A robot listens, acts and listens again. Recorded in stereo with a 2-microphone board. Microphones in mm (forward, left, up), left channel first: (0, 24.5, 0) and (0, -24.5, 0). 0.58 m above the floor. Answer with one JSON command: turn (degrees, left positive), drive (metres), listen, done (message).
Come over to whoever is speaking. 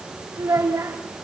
{"turn": -75}
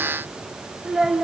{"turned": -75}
{"turn": -10}
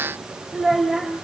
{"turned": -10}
{"drive": 1.0}
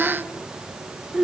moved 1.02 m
{"drive": 1.0}
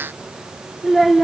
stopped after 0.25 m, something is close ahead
{"done": "Arrived at the child speaking, straight ahead."}